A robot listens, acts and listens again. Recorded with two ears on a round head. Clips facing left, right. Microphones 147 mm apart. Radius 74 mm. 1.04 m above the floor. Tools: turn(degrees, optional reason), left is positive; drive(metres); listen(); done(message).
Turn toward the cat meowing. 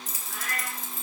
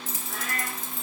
turn(degrees=-65, reason="The cat meowing: about 65° right or 115° right.")
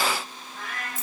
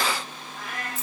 done("Facing the cat meowing, over 4 m away.")